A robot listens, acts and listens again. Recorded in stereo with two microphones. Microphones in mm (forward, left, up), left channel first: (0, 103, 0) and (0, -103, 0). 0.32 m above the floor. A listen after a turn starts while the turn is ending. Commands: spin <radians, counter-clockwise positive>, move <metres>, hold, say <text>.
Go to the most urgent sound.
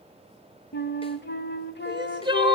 spin -0.44
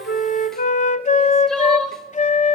move 1.0
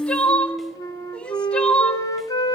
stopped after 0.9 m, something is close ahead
say Arrived at the crying, straight ahead.